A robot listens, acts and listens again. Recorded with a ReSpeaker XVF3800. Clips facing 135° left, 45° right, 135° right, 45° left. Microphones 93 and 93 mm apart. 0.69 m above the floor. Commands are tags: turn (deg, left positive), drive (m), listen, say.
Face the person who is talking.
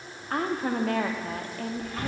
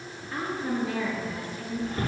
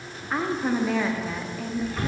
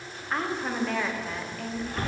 <turn deg="140"/>
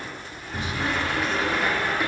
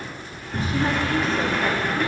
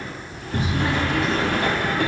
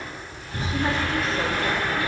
<listen/>
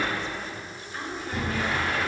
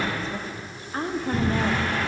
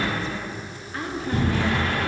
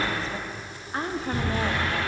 <say>Found it: a woman speaking, straight ahead, under 1 m away.</say>